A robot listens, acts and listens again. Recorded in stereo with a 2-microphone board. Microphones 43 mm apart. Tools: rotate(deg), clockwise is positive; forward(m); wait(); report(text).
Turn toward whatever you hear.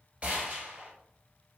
rotate(35)
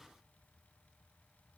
wait()
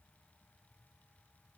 report("I heard a gunshot, but can't make it out now. It was about straight ahead or 110° right.")